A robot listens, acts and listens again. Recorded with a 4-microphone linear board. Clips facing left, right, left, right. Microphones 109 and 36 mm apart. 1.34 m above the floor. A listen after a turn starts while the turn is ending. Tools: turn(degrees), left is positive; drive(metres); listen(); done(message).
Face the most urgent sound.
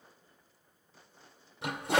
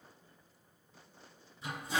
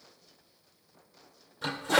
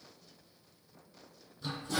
listen()
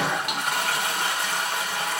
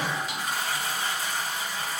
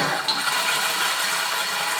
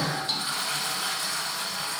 listen()
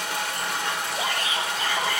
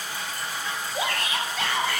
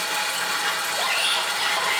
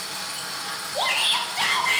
turn(degrees=-75)
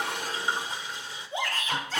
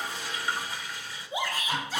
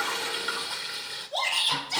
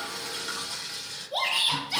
turn(degrees=-10)
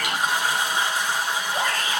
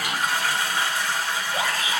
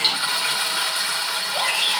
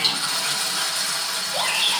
done("Found it: a shout, straight ahead, 1 to 2 m away.")